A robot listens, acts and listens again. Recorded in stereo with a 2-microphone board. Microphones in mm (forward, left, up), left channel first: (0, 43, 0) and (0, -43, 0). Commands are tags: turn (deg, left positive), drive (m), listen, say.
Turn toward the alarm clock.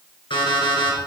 <turn deg="75"/>
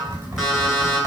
<say>Found it: an alarm clock, straight ahead, 2 to 4 m away.</say>